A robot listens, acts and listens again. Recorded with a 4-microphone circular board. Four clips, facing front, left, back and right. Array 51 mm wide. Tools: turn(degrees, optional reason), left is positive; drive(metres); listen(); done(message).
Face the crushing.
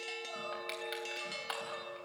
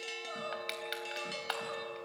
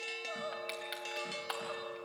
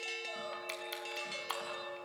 turn(degrees=90, reason="The crushing: 90° left.")
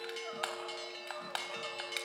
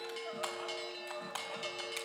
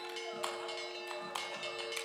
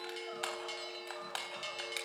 turn(degrees=-20, reason="The crushing is now 20° right.")
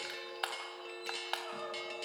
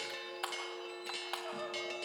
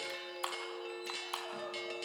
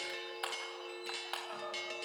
done("Found it: crushing, straight ahead, 2 to 4 m away.")